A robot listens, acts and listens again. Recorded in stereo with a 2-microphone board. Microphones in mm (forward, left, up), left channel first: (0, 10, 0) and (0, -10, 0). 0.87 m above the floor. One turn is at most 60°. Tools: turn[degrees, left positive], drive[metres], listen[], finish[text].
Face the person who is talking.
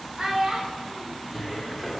Thought: The child speaking: about 65° right or 115° right.
Action: turn[-60]
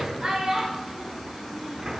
Thought: So it is at 55° right.
Action: turn[-55]
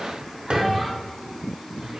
Action: listen[]
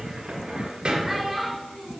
Thought: The child speaking is now 20° right.
Action: turn[-20]
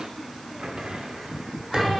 Action: listen[]
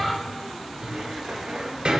Action: listen[]
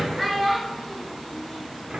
Action: finish[Found it: a child speaking, straight ahead.]